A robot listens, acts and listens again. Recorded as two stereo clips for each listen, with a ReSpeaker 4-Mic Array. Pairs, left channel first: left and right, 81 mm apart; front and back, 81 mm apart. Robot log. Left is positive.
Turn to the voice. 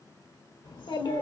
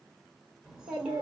note: The child speaking: 100° left.
cmd yaw +100
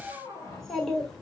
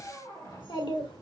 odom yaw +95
end: Facing the child speaking, 1 to 2 m away.